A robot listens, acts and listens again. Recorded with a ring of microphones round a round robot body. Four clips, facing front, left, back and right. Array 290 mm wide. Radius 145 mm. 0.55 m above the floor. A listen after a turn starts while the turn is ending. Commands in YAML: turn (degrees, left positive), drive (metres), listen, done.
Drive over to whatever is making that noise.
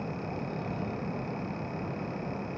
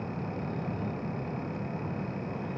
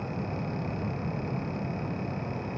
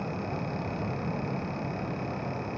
listen: true
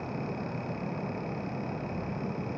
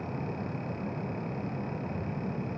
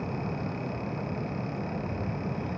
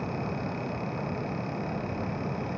listen: true
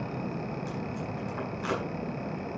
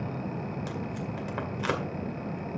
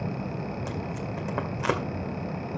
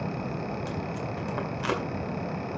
turn: 165
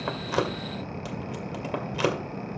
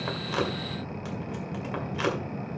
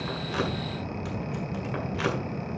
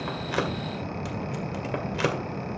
turn: -40
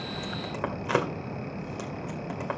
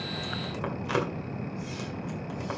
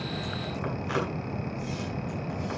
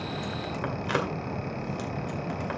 turn: -15
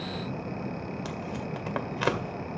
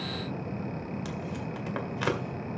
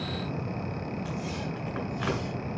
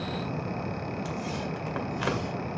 drive: 1.0
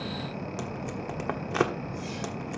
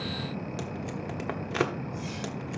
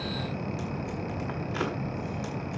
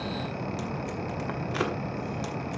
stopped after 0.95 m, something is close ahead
turn: 15
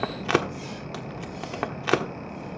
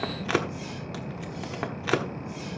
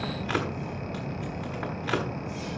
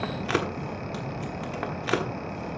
done: "I am next to the tape being pulled."